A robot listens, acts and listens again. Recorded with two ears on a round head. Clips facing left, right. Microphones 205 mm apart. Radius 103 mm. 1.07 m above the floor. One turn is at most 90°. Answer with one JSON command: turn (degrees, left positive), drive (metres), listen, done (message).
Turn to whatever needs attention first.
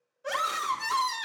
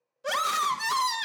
{"turn": -50}
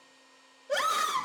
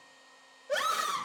{"done": "Facing the scream."}